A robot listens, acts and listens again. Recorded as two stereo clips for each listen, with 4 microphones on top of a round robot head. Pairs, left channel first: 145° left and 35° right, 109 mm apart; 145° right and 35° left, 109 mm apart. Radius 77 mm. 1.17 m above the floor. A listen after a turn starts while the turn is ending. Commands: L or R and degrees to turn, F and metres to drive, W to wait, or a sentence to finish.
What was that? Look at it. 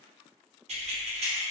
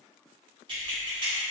R10
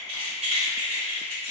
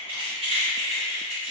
Facing the keys jangling.